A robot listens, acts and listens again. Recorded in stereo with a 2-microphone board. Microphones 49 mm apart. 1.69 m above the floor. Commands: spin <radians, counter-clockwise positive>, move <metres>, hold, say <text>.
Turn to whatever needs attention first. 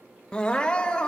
spin 0.35
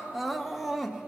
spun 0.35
say Found it: crying, straight ahead.